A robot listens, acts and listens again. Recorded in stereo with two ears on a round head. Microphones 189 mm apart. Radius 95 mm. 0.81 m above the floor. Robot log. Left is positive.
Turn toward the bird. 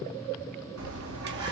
note: The bird: about 75° right or 105° right.
cmd yaw -75
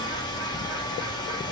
cmd idle
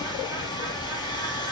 cmd idle
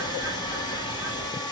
end: I heard a bird, but can't make it out now. It was about straight ahead or 30° right.